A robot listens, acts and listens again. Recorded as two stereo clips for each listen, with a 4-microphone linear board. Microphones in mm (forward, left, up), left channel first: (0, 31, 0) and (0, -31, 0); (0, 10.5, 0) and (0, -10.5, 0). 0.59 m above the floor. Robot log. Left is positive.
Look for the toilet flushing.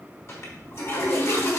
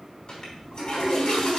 note: The toilet flushing: about 45° left or 135° left.
cmd yaw +45
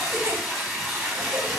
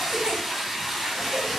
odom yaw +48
end: Found it: a toilet flushing, straight ahead.